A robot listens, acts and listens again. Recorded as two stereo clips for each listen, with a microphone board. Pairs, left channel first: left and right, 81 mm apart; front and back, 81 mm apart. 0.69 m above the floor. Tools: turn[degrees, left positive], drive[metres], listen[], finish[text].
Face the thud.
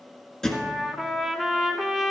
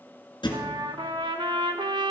Thought: The thud: 10° left.
Action: turn[10]
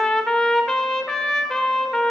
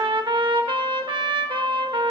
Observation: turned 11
Action: finish[I heard a thud from this way, but can't make it out now.]